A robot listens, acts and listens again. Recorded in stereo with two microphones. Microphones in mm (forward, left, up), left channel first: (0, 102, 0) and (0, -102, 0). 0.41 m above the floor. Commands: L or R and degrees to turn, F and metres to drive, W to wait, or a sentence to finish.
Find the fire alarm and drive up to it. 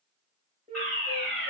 L30
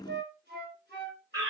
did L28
R20
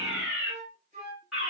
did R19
F1.0
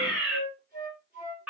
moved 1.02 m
F1.0
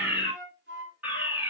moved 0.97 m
R15
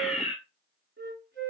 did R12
F1.0
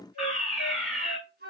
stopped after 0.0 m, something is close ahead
I am next to the fire alarm.